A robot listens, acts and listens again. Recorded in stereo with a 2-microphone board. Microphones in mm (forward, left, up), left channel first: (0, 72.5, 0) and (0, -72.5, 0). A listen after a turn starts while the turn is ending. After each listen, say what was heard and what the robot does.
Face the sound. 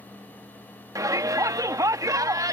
The shout: about 25° right or 155° right. Turn 25° right.
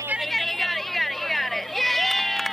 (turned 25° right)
Found it: a shout, straight ahead.